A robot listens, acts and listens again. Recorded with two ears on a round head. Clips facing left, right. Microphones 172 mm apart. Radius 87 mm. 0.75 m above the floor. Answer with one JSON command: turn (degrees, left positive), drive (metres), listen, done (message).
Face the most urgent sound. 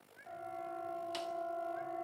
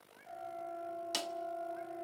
{"turn": 70}
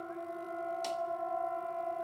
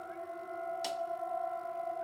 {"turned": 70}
{"turn": 40}
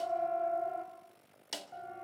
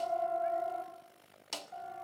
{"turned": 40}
{"turn": 25}
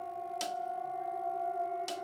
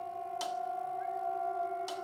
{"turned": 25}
{"done": "Facing the siren, over 4 m away."}